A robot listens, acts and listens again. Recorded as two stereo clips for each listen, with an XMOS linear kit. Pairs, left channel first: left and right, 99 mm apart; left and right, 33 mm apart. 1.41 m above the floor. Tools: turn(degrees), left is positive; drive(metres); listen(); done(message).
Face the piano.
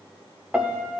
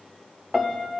turn(degrees=-30)
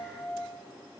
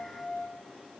turn(degrees=20)
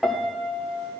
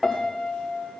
done("Facing the piano, under 1 m away.")